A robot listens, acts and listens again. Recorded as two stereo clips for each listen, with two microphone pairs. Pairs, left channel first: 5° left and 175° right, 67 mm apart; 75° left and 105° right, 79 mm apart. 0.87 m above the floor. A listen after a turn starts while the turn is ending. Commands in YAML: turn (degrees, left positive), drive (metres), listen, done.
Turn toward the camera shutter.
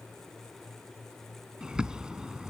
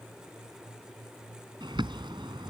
listen: true
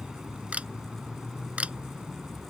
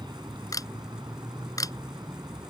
turn: 115
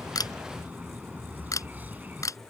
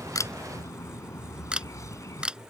turn: -30
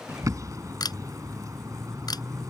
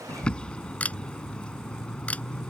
done: "Facing the camera shutter."